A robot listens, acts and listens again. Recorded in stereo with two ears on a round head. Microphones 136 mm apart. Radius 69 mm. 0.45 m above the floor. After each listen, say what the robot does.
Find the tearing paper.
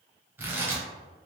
Turn 30° right.
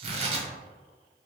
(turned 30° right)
Turn 130° right.
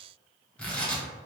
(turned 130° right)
Turn 10° left.
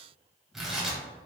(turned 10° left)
Found it: tearing paper, straight ahead, under 1 m away.